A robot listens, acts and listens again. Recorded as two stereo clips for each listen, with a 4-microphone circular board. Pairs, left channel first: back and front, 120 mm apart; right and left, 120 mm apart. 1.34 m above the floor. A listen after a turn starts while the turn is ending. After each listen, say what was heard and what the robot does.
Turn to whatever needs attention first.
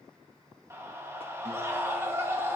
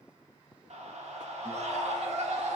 The scream: 70° left. Turn 70° left.
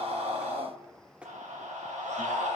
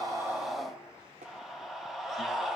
Facing the scream.